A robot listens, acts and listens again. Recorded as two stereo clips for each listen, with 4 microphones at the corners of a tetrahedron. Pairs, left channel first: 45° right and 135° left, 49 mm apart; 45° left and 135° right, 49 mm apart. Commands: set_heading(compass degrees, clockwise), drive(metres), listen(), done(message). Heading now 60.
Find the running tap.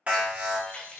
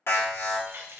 set_heading(170)
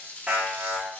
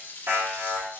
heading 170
set_heading(160)
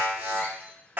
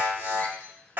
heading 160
listen()
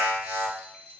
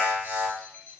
listen()
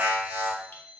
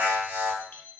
done("I heard a running tap from this way, but can't make it out now.")